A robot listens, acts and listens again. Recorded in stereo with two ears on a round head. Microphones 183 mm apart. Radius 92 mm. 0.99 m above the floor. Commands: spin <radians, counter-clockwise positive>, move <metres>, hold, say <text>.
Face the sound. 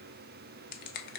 spin 0.79
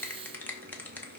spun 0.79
spin 0.17
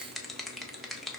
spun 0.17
say Found it: a finger snap, straight ahead, 1 to 2 m away.